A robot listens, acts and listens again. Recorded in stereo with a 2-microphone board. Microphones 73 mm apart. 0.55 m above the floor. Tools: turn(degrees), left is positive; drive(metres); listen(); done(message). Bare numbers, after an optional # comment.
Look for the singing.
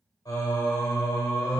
# The singing: about 55° left or 125° left.
turn(55)
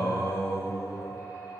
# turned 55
# So it is at 70° left.
turn(70)
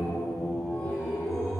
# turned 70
done("Facing the singing.")